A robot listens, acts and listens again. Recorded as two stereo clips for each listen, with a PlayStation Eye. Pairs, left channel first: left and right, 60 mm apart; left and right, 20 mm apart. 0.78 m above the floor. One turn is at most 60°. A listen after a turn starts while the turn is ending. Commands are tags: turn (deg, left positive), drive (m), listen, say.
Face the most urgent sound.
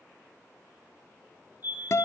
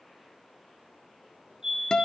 <turn deg="-35"/>
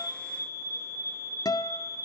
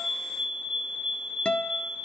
<turn deg="-60"/>
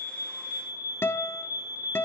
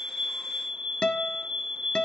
<turn deg="-55"/>
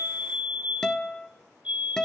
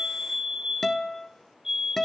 <turn deg="-25"/>
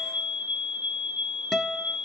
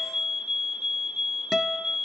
<turn deg="-20"/>
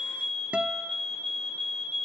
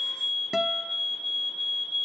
<say>Found it: a fire alarm, straight ahead, over 4 m away.</say>